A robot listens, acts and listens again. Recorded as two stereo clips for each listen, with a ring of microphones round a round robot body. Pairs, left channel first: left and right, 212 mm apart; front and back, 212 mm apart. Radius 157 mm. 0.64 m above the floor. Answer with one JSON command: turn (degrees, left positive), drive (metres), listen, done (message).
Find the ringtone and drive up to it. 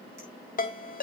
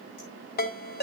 {"turn": 40}
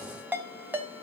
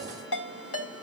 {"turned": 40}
{"turn": -10}
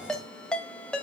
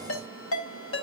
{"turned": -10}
{"drive": 1.0}
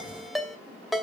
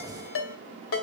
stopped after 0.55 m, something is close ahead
{"done": "Blocked. The ringtone is further on, straight ahead."}